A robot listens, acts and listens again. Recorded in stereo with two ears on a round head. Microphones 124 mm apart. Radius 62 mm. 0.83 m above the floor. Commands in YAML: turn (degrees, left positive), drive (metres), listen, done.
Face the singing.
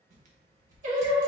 turn: -55
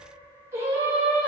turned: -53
turn: -10
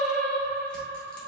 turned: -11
turn: 20
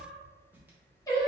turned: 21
turn: 25
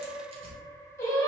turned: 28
turn: 20
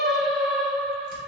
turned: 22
done: "Found it: singing, straight ahead."